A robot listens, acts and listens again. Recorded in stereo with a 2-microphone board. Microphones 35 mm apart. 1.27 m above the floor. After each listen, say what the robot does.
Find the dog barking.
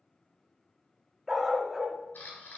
Turn 30° right.
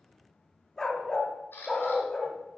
Turn 20° left.
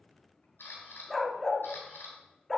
Found it: a dog barking, straight ahead.